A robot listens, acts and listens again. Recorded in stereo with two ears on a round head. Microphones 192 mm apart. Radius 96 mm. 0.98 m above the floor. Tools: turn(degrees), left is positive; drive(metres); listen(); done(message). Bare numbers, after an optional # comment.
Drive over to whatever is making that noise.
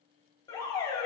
# The alarm: about 20° left or 160° left.
turn(20)
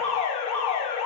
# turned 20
# So it is at 140° left.
turn(140)
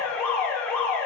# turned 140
# The alarm is now 10° left.
turn(10)
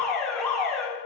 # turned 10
drive(1.0)
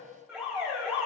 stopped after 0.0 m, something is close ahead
done("Something is in my way. I am facing the alarm but have not reached it.")